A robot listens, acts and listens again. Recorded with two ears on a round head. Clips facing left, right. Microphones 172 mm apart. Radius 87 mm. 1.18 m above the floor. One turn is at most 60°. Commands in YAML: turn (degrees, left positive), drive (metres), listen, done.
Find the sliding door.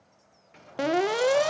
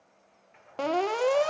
turn: 45
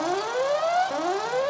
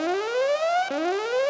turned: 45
listen: true
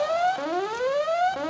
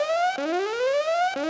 listen: true
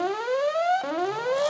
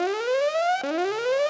done: "I heard a sliding door, but can't make it out now. It was about straight ahead or 90° left."